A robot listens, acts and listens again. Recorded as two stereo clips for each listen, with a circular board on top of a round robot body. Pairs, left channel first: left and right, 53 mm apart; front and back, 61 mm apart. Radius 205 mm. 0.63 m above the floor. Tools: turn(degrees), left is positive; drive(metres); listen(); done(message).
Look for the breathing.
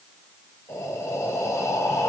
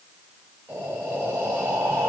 turn(degrees=120)
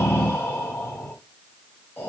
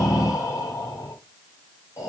turn(degrees=35)
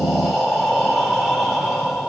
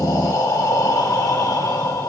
done("Found it: breathing, straight ahead, 2 to 4 m away.")